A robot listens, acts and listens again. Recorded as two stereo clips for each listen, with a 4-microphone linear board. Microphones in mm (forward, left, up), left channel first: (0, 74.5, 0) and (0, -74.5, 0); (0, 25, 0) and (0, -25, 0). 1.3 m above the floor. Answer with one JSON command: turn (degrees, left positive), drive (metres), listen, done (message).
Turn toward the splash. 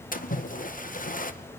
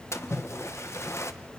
{"turn": 65}
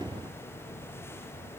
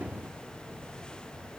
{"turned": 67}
{"listen": true}
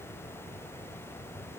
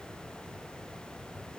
{"done": "I heard a splash, but can't make it out now. It was about straight ahead or 45° left."}